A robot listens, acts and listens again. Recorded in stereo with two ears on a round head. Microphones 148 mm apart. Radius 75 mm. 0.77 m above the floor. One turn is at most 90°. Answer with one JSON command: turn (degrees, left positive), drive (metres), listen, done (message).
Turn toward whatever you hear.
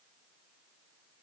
{"listen": true}
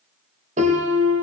{"turn": -45}
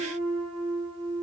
{"done": "Facing the piano."}